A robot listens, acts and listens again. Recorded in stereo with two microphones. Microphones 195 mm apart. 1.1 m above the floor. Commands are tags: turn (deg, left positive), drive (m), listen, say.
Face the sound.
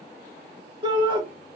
<turn deg="-25"/>
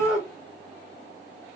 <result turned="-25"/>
<say>Found it: a shout, straight ahead, 2 to 4 m away.</say>